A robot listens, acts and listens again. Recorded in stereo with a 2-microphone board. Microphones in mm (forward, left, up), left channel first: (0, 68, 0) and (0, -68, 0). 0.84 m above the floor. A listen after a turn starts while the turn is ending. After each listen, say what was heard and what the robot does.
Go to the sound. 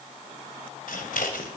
Turn 90° left.
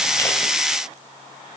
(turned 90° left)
Keep listening.
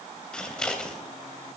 Drive 1.0 m forward.
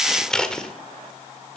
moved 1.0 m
Drive 1.0 m forward.
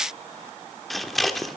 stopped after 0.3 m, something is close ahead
I am next to the scissors.